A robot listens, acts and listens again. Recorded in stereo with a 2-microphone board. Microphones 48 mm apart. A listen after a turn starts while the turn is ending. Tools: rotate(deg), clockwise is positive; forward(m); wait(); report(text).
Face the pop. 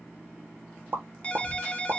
rotate(55)
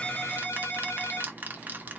wait()
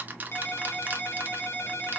report("I heard a pop, but can't make it out now. It was about straight ahead or 70° right.")